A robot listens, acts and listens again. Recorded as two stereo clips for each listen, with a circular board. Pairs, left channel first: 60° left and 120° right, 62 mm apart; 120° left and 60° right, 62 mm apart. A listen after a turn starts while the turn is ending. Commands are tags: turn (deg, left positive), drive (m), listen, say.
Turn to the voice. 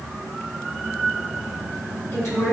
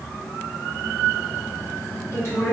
<turn deg="85"/>
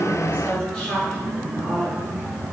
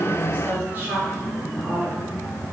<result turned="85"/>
<turn deg="-10"/>
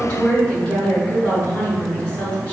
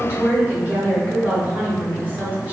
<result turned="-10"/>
<say>Found it: a woman speaking, straight ahead.</say>